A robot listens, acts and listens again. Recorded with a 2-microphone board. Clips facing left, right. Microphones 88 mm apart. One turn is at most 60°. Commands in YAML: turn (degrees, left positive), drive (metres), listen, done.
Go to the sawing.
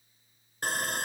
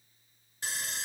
turn: 50
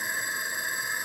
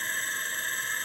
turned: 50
turn: 15
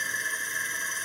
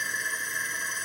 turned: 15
drive: 1.0
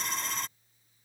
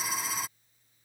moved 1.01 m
turn: -10
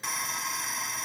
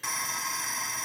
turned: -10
drive: 1.0
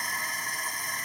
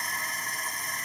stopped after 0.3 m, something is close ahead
done: "I am next to the sawing."